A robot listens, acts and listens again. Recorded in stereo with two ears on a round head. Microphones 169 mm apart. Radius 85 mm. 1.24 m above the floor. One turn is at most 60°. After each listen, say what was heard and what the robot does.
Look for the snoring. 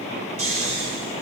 Turn 60° right.
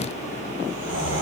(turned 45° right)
So it is at 45° right. Turn 45° right.
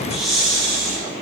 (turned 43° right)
Found it: snoring, straight ahead.